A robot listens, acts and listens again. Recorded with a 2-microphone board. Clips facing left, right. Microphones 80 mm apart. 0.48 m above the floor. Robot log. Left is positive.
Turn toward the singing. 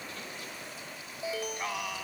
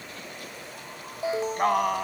note: The singing: about 45° right or 135° right.
cmd yaw -45
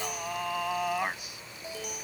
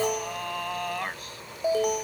note: So it is at 10° left.
cmd yaw +10
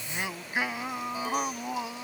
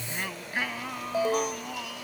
note: The singing is now 25° left.
cmd yaw +25
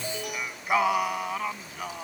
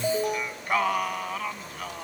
note: The singing is now 10° left.
cmd yaw +10
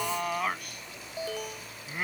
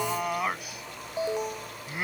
end: Facing the singing.